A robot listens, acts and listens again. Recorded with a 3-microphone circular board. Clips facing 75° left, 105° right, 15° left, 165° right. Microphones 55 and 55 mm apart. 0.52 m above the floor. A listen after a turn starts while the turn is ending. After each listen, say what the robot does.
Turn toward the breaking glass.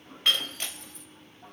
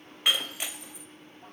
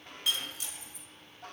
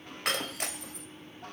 Turn 180° left.
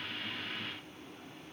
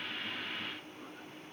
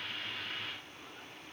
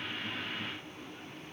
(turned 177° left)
Facing where the breaking glass came from. I can't hear it now.